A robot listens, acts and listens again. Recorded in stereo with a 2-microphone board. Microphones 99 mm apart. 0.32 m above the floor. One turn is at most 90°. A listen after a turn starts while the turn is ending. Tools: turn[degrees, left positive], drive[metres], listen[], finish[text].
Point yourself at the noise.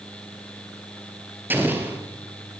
Thought: The explosion: about 20° right or 160° right.
Action: turn[-20]
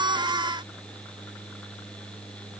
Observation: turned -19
Action: listen[]
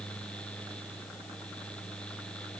Action: finish[I heard an explosion, but can't make it out now. It was about straight ahead or 140° right.]